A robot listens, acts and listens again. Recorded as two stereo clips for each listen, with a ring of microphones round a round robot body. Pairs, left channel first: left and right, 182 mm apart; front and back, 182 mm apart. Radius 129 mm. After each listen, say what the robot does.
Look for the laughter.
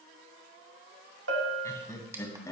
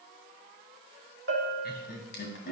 Turn 20° left.
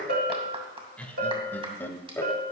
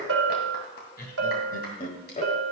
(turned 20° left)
Turn 20° left.
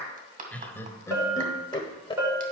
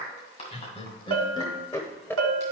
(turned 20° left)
Turn 70° left.
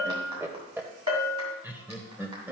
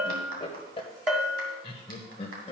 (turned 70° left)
Turn 20° right.
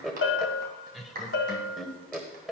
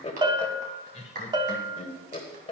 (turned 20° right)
Facing the laughter, 1 to 2 m away.